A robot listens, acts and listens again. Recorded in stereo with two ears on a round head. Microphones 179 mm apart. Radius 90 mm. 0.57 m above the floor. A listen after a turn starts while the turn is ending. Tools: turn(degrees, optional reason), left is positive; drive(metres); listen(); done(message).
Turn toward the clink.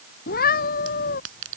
turn(degrees=-75, reason="The clink: about 75° right or 105° right.")
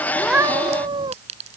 turn(degrees=-35, reason="So it is at 35° right.")
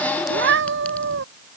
listen()
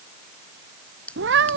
done("Facing the clink.")